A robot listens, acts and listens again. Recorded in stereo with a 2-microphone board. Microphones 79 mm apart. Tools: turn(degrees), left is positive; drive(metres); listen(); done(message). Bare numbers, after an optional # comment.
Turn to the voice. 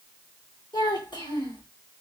# The child speaking: about 70° left or 110° left.
turn(70)
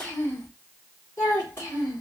# So it is at 35° left.
turn(35)
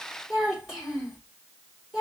done("Facing the child speaking, 2 to 4 m away.")